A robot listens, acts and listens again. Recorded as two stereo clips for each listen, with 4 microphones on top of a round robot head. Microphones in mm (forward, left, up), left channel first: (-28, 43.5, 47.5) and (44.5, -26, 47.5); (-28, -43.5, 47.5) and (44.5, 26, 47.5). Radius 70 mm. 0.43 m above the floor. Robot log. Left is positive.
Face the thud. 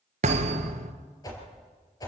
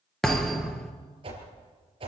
note: The thud: 50° right.
cmd yaw -50
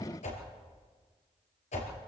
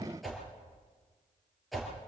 end: Facing where the thud came from. I can't hear it now.